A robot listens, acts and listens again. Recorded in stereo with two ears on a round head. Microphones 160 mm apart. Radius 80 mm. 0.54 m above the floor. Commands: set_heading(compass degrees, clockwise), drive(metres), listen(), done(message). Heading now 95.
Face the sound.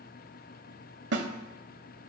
set_heading(165)
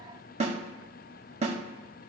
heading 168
set_heading(203)
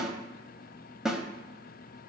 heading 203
done("Facing the snare drum.")